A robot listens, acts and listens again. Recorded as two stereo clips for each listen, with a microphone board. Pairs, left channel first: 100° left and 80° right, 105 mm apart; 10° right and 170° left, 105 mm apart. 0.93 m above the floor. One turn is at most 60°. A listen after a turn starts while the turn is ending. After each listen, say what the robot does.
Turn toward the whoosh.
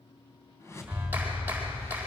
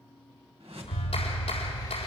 Turn 60° left.
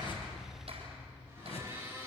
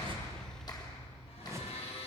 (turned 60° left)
Turn 60° left.
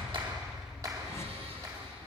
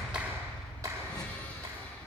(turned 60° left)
Turn 50° left.
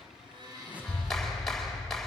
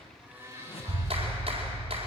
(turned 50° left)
Facing the whoosh, 2 to 4 m away.